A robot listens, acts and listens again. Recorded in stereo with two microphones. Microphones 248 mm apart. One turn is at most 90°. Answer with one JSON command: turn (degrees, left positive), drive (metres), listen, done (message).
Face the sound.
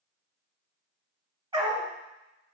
{"turn": -20}
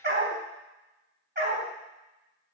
{"turn": -90}
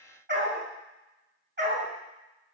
{"turn": -45}
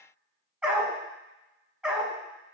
{"done": "Found it: a dog barking, straight ahead."}